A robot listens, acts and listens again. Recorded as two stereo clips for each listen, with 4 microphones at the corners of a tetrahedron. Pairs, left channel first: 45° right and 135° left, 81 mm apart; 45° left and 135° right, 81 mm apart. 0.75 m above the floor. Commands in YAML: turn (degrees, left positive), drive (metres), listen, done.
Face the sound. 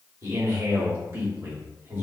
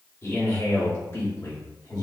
turn: 75
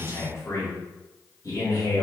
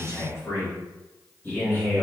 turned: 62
turn: -20
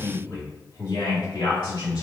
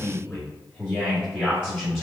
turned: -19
turn: -25
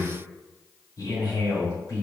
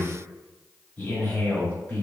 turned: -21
done: "Found it: a man speaking, straight ahead."